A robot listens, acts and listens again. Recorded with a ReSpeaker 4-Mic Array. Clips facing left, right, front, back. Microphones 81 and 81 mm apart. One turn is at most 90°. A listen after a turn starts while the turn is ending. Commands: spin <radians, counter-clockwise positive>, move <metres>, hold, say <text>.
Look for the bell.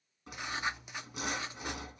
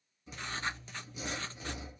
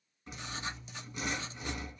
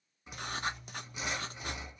hold
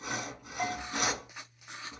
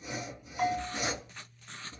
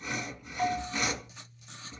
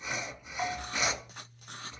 spin -1.57
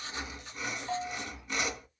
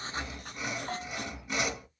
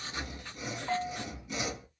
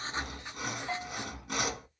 spin -0.79
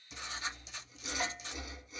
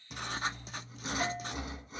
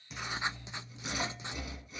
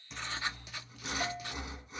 hold
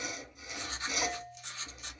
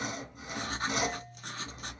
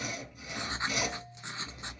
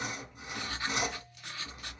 hold
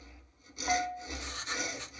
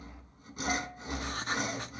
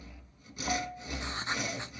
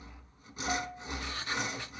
say Facing the bell.